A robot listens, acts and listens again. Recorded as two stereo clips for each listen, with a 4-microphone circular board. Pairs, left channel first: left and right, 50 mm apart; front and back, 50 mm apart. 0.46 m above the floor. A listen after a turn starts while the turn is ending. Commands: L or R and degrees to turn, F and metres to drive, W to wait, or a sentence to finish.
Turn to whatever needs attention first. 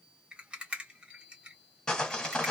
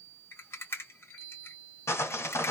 W
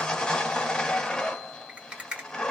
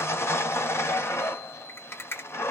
W
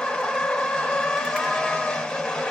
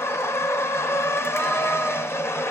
I can't make out anything urgent, only a rattle and sawing.